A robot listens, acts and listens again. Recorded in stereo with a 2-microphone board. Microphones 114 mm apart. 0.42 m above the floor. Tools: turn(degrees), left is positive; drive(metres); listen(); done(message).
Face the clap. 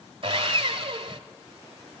listen()
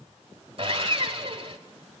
listen()
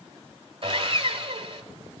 done("I can't make out a clap to turn to.")